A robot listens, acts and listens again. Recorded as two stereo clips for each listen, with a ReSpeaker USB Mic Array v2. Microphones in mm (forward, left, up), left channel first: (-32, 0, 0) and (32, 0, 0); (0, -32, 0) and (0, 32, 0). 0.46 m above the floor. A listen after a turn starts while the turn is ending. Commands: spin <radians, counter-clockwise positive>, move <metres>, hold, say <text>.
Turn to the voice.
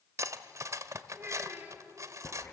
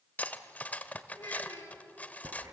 spin -1.05
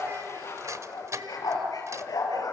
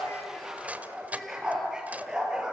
hold
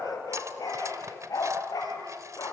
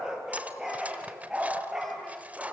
hold
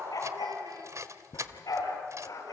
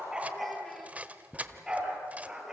say I heard a child speaking from this way, but can't make it out now.